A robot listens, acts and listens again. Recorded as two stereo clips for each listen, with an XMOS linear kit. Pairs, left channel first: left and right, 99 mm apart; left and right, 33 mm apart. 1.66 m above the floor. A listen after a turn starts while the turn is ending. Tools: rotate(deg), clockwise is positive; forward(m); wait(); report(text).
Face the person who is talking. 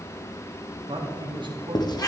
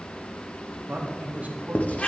rotate(50)
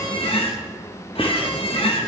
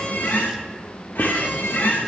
wait()
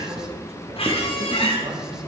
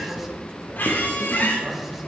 wait()
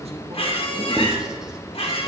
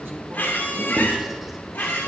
report("I heard a man speaking, but can't make it out now. It was about straight ahead or 80° right.")